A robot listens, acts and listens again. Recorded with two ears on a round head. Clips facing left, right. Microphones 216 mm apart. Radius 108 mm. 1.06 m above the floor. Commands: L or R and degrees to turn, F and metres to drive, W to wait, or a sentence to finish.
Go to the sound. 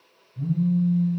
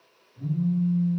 L25
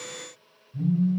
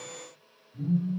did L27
L130
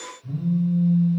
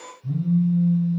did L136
R10
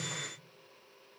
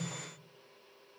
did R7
W
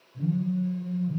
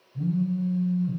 F1.0
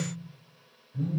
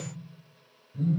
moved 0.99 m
F1.0
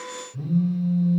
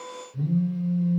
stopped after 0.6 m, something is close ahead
L10
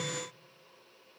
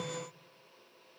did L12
W
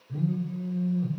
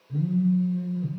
Arrived at the phone buzzing, straight ahead.